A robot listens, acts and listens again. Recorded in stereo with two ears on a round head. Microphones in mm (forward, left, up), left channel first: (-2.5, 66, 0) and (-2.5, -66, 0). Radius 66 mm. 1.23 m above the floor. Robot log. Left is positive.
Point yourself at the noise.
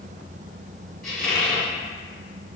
cmd yaw +30
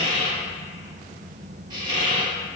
note: So it is at 30° right.
cmd yaw -30
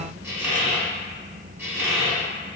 note: The squeak is now 15° right.
cmd yaw -15
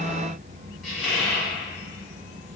end: Facing the squeak.